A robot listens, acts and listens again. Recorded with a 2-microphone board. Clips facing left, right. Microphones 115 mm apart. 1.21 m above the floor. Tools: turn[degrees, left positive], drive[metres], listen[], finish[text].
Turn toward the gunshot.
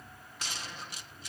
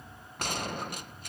Thought: The gunshot: about 55° right or 125° right.
Action: turn[-55]
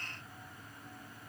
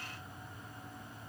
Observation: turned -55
Action: listen[]
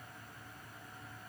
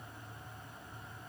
Action: finish[I heard a gunshot, but can't make it out now. It was about straight ahead or 70° right.]